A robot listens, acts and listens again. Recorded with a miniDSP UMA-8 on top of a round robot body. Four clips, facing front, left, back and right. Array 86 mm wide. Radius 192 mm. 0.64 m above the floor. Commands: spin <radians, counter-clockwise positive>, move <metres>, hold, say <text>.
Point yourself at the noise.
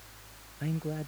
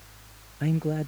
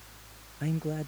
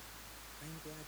spin 1.75
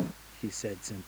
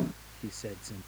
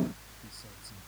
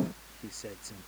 hold
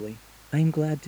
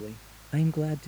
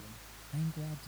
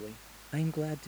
say Facing the man speaking.